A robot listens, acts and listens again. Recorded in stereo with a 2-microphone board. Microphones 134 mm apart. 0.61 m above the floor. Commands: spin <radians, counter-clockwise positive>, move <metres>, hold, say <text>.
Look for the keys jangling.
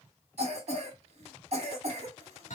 hold
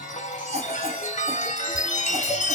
hold
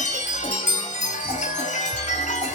say I can't make out keys jangling, only a chime and a cough.